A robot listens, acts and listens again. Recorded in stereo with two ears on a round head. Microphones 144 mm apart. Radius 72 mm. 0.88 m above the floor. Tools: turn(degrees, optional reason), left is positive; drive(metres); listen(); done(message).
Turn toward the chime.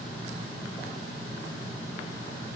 listen()
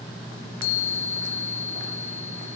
turn(degrees=60, reason="The chime: about 60° left or 120° left.")
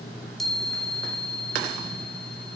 done("Facing the chime.")